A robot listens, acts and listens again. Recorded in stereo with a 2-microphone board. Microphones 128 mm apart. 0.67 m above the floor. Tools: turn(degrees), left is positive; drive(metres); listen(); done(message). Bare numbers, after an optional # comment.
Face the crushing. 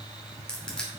turn(30)
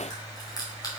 # So it is at 145° left.
turn(145)
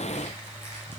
listen()
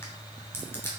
# The crushing is now 20° left.
turn(20)
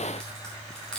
# The crushing is now 10° left.
turn(10)
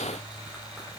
listen()
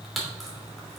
done("Facing the crushing.")